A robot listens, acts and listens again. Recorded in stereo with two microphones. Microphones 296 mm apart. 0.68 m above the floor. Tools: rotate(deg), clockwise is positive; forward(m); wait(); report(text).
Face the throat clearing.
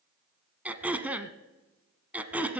rotate(30)
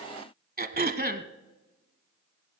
rotate(145)
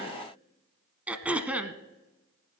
report("Found it: throat clearing, straight ahead.")